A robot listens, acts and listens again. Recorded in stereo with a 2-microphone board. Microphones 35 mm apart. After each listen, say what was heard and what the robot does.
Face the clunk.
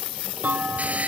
The clunk: about 50° right or 130° right. Turn 50° right.
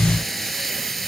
Keep listening.
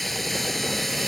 I heard a clunk, but can't make it out now. It was about straight ahead or 80° right.